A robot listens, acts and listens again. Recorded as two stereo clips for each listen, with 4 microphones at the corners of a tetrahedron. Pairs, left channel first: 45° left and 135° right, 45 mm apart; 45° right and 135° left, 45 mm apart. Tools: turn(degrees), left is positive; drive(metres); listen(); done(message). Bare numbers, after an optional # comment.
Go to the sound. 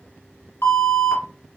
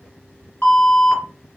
# The alarm: 15° left.
turn(15)
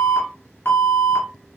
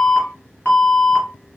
# The alarm is now 10° left.
turn(10)
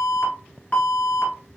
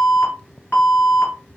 drive(1.0)
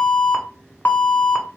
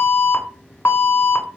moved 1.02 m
drive(1.0)
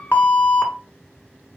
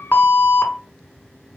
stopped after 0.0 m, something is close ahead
done("Arrived at the alarm, straight ahead.")